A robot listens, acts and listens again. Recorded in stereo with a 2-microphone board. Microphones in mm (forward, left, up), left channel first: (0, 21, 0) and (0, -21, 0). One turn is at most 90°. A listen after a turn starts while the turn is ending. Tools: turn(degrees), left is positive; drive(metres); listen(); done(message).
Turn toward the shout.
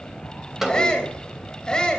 turn(degrees=20)
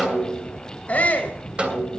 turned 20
turn(degrees=90)
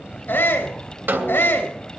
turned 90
turn(degrees=90)
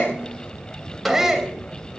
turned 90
turn(degrees=-15)
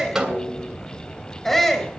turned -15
done("Facing the shout.")